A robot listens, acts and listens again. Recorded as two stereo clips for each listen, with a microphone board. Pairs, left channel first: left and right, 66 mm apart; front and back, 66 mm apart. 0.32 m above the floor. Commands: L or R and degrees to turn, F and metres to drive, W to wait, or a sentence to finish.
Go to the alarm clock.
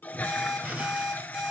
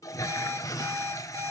R175
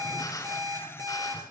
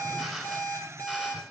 R60
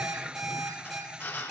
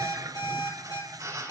F1.0
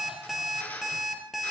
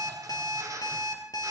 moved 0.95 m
F1.0
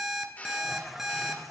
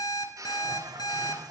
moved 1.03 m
F1.0
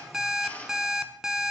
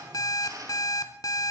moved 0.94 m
F1.0
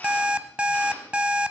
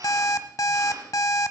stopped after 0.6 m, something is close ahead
R15
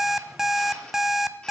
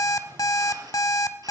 I am next to the alarm clock.